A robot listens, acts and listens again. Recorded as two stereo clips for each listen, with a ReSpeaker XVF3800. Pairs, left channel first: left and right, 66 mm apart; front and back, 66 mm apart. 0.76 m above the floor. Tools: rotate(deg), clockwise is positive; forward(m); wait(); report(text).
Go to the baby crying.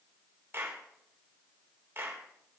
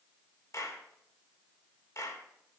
wait()
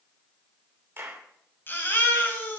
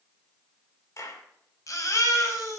rotate(-35)
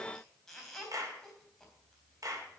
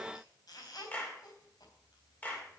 forward(1.0)
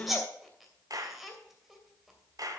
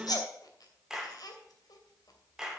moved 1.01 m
forward(1.0)
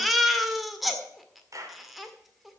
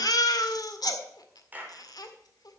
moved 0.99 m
forward(1.0)
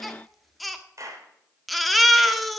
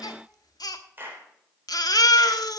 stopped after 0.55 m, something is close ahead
report("Arrived at the baby crying, straight ahead.")